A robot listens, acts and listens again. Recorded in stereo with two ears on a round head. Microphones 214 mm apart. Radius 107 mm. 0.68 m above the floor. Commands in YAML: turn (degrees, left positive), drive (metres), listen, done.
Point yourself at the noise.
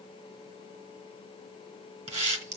turn: -30
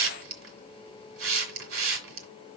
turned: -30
turn: -125
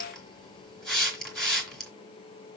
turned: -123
done: "Facing the hiss."